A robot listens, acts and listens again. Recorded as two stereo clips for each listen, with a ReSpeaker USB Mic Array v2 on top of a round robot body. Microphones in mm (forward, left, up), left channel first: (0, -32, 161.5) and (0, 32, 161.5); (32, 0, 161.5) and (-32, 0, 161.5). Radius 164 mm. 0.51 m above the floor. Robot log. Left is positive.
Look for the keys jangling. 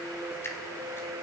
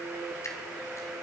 cmd idle
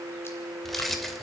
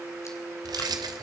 note: The keys jangling: 175° right.
cmd yaw -175
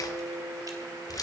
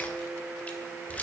note: The keys jangling is now 70° right.
cmd yaw -70
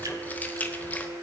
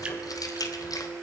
note: The keys jangling is now 25° right.
cmd yaw -25
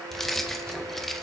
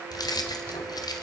end: Found it: keys jangling, straight ahead.